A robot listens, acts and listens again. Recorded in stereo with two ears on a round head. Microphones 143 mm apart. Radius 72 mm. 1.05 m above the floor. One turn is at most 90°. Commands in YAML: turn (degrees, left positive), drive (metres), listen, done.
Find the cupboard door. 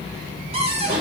turn: -40
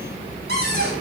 turn: -90
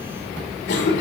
turn: -15
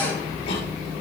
listen: true
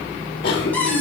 turn: 10
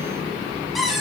done: "Facing the cupboard door."